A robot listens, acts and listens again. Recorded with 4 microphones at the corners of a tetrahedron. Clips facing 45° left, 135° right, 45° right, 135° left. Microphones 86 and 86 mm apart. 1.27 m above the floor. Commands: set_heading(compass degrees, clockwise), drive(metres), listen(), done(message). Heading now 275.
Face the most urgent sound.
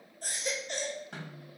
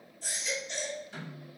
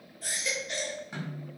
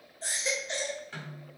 set_heading(200)
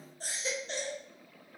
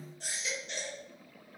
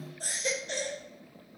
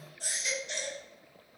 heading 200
done("Found it: a baby crying, straight ahead.")